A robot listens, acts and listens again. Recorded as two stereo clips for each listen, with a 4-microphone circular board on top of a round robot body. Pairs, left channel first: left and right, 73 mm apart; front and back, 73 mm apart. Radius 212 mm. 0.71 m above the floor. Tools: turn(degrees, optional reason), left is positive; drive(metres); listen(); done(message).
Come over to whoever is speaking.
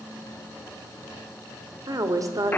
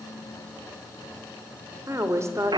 turn(degrees=-130, reason="The woman speaking: 130° right.")
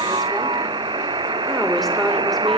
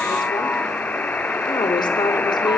drive(metres=1.0)
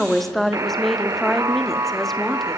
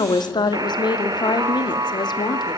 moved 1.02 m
drive(metres=1.0)
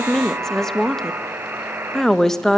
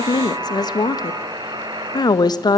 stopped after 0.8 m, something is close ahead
done("Arrived at the woman speaking, straight ahead.")